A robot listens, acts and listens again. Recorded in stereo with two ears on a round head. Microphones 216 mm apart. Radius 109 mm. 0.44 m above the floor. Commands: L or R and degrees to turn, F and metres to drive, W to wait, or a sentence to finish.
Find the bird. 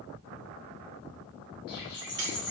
L35
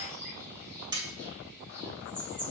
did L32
Facing the bird.